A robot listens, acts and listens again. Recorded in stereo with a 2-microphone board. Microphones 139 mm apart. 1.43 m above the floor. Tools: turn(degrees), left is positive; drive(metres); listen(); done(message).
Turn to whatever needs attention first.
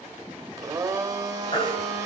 turn(degrees=40)
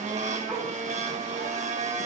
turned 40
listen()
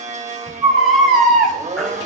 done("Facing the baby crying.")